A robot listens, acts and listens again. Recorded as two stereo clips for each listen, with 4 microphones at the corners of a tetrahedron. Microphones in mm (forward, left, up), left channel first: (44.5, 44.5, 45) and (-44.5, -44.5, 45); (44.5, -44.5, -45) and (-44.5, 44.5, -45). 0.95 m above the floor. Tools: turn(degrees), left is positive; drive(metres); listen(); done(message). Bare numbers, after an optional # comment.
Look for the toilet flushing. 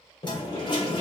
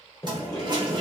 # The toilet flushing: 85° left.
turn(85)
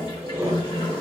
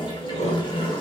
listen()
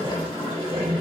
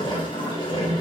listen()
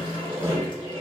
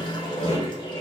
done("I heard a toilet flushing from this way, but can't make it out now.")